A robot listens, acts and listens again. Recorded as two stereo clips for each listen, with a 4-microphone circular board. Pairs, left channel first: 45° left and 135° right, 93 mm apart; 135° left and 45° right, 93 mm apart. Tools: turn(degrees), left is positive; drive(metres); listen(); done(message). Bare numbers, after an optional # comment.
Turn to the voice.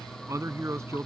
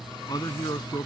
# The man speaking: 170° left.
turn(170)
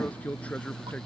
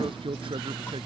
# The man speaking is now 30° right.
turn(-30)
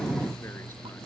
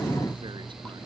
listen()
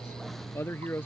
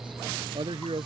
# The man speaking is now 20° right.
turn(-20)
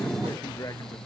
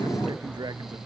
listen()
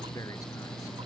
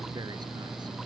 listen()
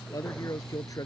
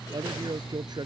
done("Found it: a man speaking, straight ahead.")